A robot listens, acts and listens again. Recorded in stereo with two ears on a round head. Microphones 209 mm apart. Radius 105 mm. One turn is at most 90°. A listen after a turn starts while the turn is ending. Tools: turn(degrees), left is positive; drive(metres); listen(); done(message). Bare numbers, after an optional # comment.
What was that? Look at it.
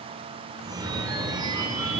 # The phone ringing: about 15° right or 165° right.
turn(-15)
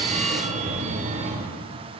# So it is at 150° right.
turn(-90)
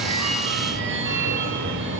# The phone ringing is now 50° right.
turn(-50)
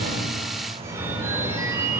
# The phone ringing is now 15° right.
turn(-15)
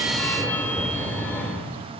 # The phone ringing is now 10° left.
turn(10)
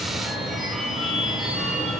done("Facing the phone ringing, 2 to 4 m away.")